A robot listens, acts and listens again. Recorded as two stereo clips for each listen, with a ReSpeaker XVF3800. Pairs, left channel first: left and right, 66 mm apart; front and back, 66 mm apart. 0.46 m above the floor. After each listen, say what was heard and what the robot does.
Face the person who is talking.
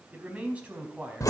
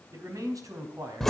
The man speaking: 160° right. Turn 160° right.
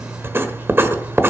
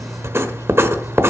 Keep listening.
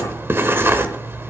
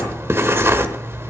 Keep listening.
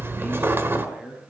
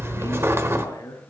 The man speaking is now 20° right. Turn 20° right.
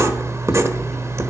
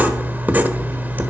Keep listening.
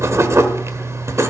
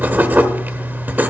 Keep listening.
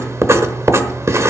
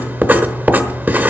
I heard a man speaking from this way, but can't make it out now.